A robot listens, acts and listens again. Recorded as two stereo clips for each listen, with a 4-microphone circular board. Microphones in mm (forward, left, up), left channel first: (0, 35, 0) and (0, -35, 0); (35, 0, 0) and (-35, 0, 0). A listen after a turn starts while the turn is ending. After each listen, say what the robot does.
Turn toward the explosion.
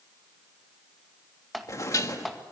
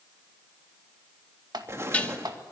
Turn 130° left.
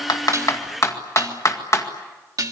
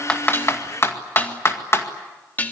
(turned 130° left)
I heard an explosion from this way, but can't make it out now.